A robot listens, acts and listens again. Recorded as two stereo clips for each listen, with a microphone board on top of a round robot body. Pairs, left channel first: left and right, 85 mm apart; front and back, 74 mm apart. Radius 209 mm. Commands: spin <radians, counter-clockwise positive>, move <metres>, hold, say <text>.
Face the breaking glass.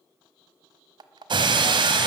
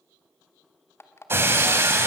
spin -2.09
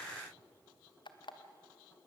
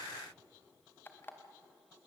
say Facing where the breaking glass came from. I can't hear it now.